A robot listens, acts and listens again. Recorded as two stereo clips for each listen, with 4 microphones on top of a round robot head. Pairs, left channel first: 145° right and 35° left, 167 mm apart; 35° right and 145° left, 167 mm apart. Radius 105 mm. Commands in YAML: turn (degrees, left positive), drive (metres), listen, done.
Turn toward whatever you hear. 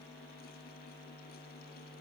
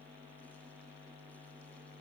listen: true
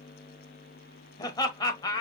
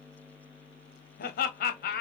turn: -75
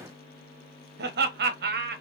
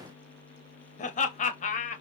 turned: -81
turn: 10
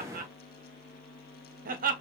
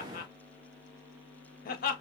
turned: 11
done: "Found it: laughter, straight ahead."